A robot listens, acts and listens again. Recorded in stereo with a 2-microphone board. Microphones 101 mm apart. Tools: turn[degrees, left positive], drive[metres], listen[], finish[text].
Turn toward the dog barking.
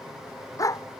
Thought: The dog barking: about 30° left or 150° left.
Action: turn[30]
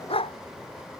Thought: So it is at 115° left.
Action: turn[115]
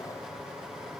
Action: listen[]
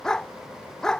Action: finish[Facing the dog barking.]